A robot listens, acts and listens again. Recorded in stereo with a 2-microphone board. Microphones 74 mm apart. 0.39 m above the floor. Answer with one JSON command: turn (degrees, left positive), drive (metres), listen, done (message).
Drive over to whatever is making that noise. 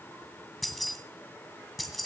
{"turn": 30}
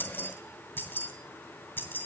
{"turn": 150}
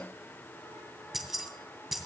{"drive": 1.0}
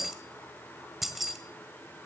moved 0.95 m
{"drive": 1.0}
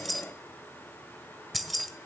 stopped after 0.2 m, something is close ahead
{"done": "Arrived at the keys jangling, straight ahead."}